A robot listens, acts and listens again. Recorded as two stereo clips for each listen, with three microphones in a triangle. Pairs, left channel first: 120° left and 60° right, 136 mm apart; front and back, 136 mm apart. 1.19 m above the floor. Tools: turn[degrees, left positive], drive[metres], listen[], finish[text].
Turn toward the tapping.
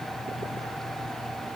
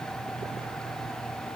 Action: listen[]
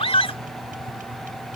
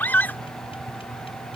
Action: listen[]
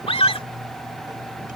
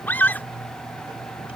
Action: finish[I can't make out tapping, only a scream.]